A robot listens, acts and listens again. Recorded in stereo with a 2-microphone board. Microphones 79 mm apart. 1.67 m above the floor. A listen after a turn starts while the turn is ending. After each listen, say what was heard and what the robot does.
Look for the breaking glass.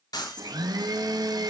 The breaking glass: about 60° left or 120° left. Turn 60° left.
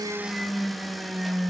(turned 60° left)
Keep listening.
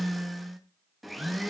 I heard breaking glass, but can't make it out now. It was about straight ahead or 60° left.